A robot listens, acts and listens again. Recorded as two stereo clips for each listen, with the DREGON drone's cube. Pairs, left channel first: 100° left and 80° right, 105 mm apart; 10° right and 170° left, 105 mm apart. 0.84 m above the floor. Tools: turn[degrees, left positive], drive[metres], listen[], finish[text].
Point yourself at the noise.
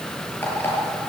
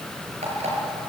Thought: The alarm clock: 175° left.
Action: turn[175]
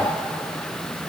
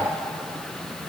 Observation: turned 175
Action: listen[]
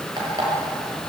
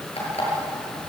Thought: The alarm clock is now 35° right.
Action: turn[-35]
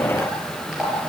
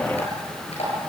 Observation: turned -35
Action: finish[Found it: an alarm clock, straight ahead, over 4 m away.]